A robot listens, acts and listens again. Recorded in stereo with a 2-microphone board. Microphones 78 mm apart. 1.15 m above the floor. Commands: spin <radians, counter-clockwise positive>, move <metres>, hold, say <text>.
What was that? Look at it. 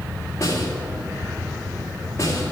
spin 0.70
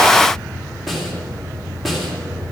say Found it: a snare drum, straight ahead, 2 to 4 m away.